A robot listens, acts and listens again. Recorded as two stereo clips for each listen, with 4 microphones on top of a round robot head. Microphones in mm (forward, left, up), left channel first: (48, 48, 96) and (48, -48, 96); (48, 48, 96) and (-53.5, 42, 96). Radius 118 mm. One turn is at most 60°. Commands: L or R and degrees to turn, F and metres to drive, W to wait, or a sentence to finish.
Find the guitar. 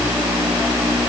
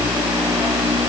W
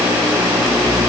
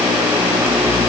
W
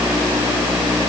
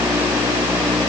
I can't make out a guitar.